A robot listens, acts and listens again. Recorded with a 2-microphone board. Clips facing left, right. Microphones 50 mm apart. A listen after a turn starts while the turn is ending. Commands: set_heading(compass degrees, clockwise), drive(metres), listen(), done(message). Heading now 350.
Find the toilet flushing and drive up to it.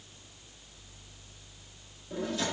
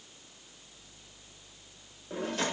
listen()
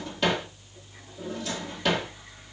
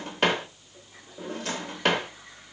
listen()
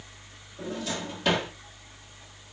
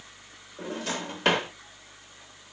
done("I can't make out a toilet flushing, only a drawer.")